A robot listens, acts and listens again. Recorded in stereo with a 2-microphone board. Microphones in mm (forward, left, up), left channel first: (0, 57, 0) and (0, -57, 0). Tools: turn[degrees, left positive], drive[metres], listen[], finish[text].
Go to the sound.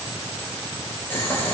Thought: The boiling: about 20° left or 160° left.
Action: turn[20]
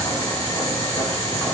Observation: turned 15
Thought: So it is at 145° left.
Action: turn[145]
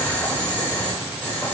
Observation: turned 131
Thought: The boiling is now 15° left.
Action: turn[15]
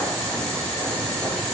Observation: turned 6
Thought: The boiling is now 10° left.
Action: turn[10]
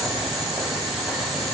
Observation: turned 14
Action: drive[1.0]
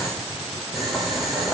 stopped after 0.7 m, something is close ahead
Action: finish[Blocked. The boiling is further on, straight ahead.]